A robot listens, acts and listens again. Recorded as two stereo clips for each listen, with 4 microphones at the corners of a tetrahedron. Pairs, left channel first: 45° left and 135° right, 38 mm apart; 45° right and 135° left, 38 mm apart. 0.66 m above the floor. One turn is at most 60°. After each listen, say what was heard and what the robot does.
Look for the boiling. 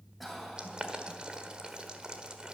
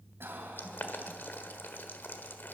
The boiling: 70° right. Turn 60° right.
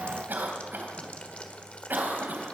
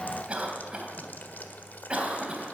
The boiling is now 10° right. Turn 10° right.
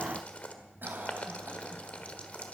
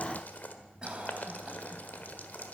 Facing the boiling, 1 to 2 m away.